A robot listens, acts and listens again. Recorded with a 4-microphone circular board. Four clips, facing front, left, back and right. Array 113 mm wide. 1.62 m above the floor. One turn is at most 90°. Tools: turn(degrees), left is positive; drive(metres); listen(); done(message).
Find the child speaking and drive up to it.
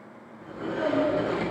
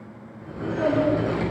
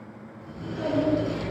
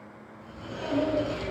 turn(degrees=85)
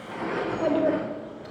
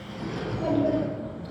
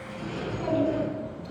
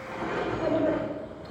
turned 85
drive(metres=1.0)
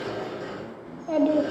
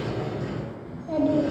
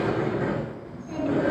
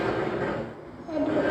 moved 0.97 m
drive(metres=1.0)
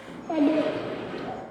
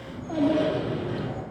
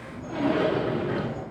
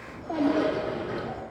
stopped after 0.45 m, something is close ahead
turn(degrees=-10)
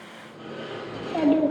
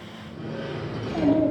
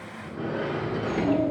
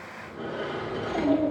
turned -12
done("I am next to the child speaking.")